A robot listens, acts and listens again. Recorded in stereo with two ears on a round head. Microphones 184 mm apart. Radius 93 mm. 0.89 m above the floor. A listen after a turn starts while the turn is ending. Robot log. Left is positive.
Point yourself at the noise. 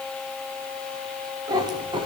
note: The cat meowing: about 25° right or 155° right.
cmd yaw -25
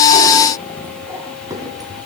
note: The cat meowing: about 20° right or 160° right.
cmd yaw -20
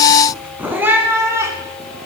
cmd yaw -30
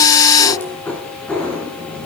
end: Facing the cat meowing.